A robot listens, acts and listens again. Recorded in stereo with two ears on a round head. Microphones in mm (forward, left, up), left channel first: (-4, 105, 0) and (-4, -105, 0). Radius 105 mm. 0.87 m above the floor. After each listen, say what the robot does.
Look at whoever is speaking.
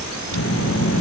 Turn 65° left.
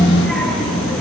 Facing the child speaking.